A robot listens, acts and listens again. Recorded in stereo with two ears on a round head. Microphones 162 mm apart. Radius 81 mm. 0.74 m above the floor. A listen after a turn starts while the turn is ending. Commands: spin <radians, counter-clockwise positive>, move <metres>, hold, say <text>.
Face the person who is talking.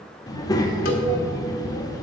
spin 0.35
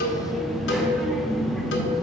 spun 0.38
say Facing the child speaking, 1 to 2 m away.